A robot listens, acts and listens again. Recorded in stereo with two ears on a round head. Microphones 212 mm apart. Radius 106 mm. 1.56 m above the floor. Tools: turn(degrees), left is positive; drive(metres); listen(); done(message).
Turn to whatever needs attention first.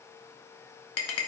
listen()
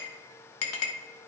listen()
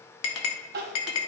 turn(degrees=-40)
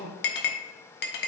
turn(degrees=-100)
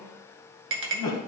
turn(degrees=15)
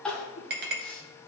done("Found it: crying, straight ahead, 1 to 2 m away.")